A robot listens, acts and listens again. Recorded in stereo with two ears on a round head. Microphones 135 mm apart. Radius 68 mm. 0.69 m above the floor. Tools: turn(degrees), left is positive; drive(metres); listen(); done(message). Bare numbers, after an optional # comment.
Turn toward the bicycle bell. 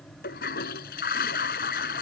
listen()
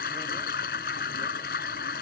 listen()
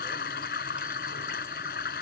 done("I can't make out a bicycle bell, only a toilet flushing.")